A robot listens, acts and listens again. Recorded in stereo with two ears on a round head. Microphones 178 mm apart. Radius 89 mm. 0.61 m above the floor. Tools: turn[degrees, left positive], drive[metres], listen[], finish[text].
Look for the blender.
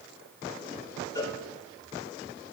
Action: listen[]
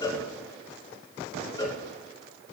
Action: listen[]
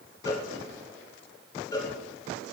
Action: finish[I can't make out a blender, only a cowbell.]